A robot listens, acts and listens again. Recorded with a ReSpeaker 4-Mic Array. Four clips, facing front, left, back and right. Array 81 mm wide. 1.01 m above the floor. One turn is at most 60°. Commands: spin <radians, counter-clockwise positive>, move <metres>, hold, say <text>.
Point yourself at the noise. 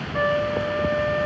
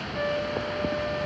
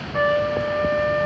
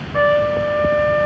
spin -1.05
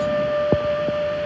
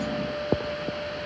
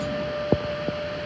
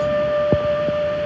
spin -1.05
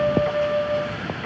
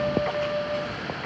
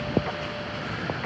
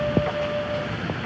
say Found it: a trumpet, straight ahead.